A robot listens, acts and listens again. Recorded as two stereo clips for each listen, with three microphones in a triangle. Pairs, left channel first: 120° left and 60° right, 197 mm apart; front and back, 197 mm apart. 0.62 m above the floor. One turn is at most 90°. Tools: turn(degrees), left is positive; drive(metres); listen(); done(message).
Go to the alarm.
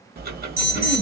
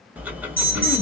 turn(degrees=-15)
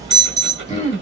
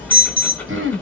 drive(metres=1.0)
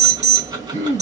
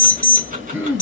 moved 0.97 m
drive(metres=1.0)
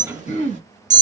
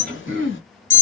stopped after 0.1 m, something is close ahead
done("Arrived at the alarm, straight ahead.")